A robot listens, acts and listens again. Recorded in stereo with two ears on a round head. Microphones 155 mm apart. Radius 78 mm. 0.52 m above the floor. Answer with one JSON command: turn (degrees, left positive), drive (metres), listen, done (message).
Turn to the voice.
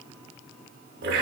{"listen": true}
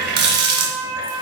{"listen": true}
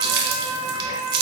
{"done": "I can't make out anyone speaking, only a running tap and a flute."}